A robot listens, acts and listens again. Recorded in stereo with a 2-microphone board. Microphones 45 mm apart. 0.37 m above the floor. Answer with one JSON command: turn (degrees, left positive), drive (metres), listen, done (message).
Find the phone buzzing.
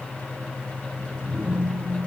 {"turn": -65}
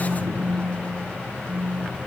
{"turn": -45}
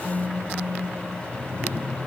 {"done": "Facing the phone buzzing, 2 to 4 m away."}